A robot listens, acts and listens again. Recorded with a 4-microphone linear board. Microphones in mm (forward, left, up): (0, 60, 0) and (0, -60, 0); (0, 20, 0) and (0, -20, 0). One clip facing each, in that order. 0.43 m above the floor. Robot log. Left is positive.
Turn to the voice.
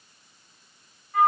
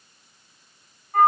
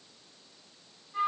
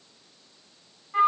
cmd idle
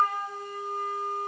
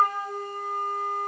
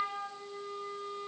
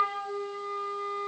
cmd idle
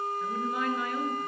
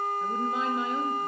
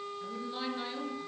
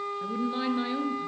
note: The woman speaking: about 20° right or 160° right.
cmd yaw -20
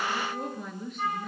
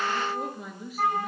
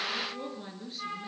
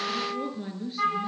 end: Facing the woman speaking.